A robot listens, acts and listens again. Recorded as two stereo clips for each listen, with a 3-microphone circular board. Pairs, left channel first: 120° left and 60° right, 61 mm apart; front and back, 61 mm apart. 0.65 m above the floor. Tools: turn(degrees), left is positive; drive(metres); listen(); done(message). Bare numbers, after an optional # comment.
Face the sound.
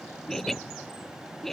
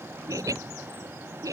# The laughter: 155° right.
turn(-155)
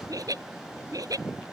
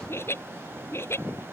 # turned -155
# The laughter is now 45° right.
turn(-45)
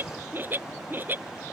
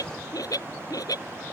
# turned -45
done("Found it: laughter, straight ahead.")